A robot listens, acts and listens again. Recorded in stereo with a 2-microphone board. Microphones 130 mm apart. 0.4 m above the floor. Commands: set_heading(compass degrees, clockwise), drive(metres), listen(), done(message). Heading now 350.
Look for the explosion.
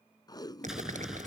set_heading(20)
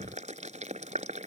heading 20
listen()
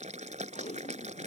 done("I heard an explosion, but can't make it out now. It was about 25° left or 145° right.")